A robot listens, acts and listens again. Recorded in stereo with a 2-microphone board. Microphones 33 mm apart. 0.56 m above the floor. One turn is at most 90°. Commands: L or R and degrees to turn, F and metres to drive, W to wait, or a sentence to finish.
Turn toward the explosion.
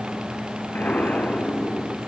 L70
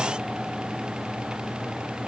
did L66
W
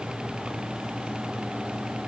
I heard an explosion, but can't make it out now. It was about 5° left or 40° left.